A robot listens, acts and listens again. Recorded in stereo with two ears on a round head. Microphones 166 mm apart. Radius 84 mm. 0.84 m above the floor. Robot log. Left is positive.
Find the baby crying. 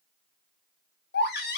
note: The baby crying: about 55° left or 125° left.
cmd yaw +55
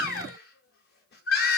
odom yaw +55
note: So it is at 60° left.
cmd yaw +60
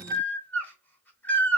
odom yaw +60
note: The baby crying is now 10° left.
cmd yaw +10
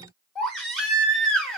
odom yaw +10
end: Found it: a baby crying, straight ahead.